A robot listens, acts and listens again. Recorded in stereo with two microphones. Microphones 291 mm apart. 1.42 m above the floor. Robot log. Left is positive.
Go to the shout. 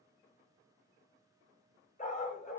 cmd idle
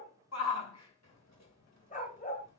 note: The shout: about 70° left or 110° left.
cmd yaw +70
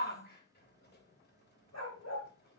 note: So it is at 40° left.
cmd yaw +40
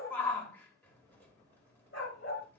cmd fwd 1.0
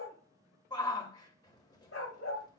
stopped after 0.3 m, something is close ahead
note: The shout is now 15° left.
cmd yaw +15
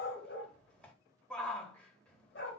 end: Something is in my way. I am facing the shout but have not reached it.